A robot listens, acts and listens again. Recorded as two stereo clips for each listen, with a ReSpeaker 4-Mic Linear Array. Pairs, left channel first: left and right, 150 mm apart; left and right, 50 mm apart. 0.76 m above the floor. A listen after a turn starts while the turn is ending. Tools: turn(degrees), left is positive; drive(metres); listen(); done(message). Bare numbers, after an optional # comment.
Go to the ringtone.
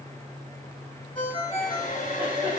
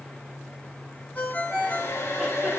# The ringtone: about 35° left or 145° left.
turn(35)
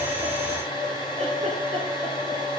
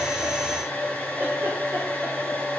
listen()
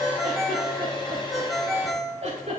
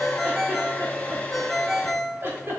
drive(1.0)
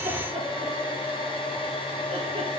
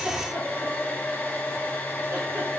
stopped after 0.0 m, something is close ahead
listen()
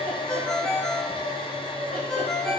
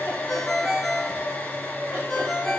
done("Blocked. The ringtone is further on, straight ahead.")